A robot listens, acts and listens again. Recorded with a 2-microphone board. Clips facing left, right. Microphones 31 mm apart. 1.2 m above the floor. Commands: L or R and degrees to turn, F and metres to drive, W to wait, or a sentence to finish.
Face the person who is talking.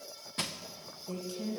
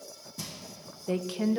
R45
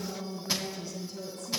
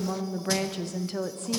R80
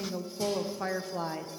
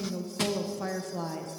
L15
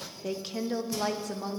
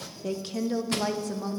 Facing the woman speaking.